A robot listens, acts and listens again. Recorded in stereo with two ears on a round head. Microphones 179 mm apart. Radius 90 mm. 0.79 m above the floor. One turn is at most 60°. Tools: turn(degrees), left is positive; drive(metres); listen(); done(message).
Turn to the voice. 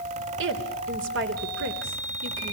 turn(degrees=-60)
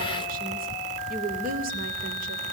turn(degrees=-45)
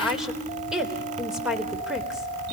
done("Facing the woman speaking.")